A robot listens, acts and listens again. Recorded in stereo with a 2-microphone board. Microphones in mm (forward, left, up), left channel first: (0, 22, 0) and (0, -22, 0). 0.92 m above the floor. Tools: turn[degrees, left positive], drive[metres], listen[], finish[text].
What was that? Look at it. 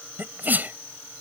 Thought: The sneeze: about 45° right or 135° right.
Action: turn[-45]
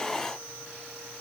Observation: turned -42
Action: listen[]
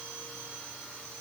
Action: finish[I heard a sneeze, but can't make it out now. It was about straight ahead or 95° right.]